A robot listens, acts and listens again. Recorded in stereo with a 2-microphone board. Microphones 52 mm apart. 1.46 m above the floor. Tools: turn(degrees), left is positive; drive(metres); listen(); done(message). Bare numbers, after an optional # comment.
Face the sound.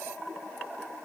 listen()
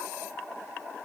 listen()
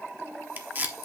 # The tape being pulled: about 35° right or 145° right.
turn(-35)
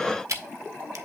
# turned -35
# So it is at 110° right.
turn(-110)
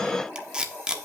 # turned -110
# The tape being pulled is now 15° right.
turn(-15)
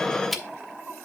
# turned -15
done("Found it: tape being pulled, straight ahead, under 1 m away.")